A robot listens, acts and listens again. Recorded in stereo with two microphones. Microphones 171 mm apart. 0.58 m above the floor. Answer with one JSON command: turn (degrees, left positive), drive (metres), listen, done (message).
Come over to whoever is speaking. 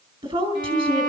{"turn": -30}
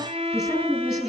{"drive": 1.0}
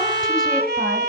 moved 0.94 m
{"listen": true}
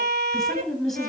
{"drive": 1.0}
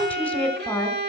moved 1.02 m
{"turn": 10}
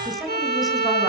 {"drive": 1.0}
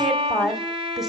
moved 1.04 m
{"drive": 1.0}
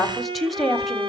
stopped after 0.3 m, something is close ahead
{"done": "I am next to the woman speaking."}